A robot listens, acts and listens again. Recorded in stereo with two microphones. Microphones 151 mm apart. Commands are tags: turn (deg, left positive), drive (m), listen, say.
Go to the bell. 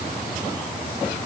<listen/>
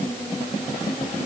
<listen/>
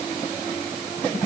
<say>I can't make out a bell.</say>